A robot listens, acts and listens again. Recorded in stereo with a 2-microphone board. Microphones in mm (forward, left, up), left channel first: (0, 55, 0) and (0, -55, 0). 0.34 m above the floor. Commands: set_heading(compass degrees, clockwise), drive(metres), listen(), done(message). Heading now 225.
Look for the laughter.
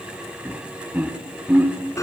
set_heading(240)
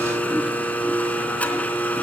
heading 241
listen()
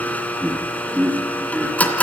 set_heading(271)
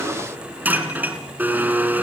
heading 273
listen()
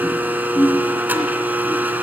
set_heading(253)
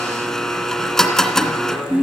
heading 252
done("Facing the laughter, over 4 m away.")